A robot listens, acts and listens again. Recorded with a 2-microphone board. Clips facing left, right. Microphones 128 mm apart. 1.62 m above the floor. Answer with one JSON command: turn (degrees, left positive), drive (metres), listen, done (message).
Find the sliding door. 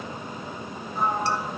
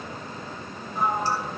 {"turn": 30}
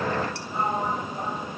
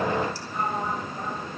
{"turn": 150}
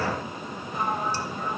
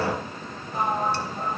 {"turn": -40}
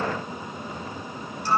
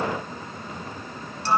{"turn": -20}
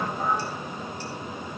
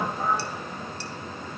{"turn": -10}
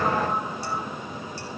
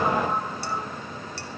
{"listen": true}
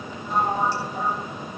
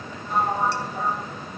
{"done": "Facing the sliding door."}